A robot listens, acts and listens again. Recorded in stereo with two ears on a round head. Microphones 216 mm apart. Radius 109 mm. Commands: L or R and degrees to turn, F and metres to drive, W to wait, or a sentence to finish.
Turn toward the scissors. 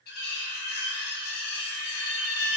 W
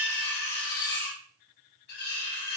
W
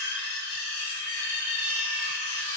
I can't make out scissors, only cutlery clinking.